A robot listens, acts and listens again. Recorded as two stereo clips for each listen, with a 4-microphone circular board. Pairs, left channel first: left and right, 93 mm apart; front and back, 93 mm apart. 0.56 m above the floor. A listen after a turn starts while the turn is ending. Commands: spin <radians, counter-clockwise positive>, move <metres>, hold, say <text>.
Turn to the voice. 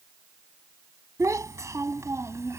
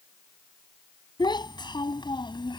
spin -0.52
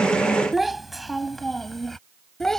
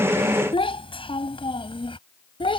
say Found it: a child speaking, straight ahead.